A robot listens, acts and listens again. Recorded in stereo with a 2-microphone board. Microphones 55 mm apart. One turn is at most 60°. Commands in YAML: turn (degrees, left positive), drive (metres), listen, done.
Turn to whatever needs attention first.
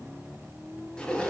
listen: true
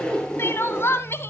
turn: 50
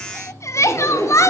turn: 60
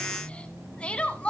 turn: 20
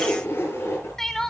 turn: 10
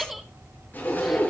done: "Facing the crying."